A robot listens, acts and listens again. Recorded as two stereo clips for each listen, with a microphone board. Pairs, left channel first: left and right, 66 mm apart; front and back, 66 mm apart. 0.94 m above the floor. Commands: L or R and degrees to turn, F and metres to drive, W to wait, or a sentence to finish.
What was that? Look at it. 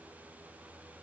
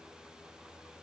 W
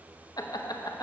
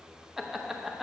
L95
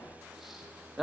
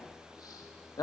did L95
Found it: laughter, straight ahead.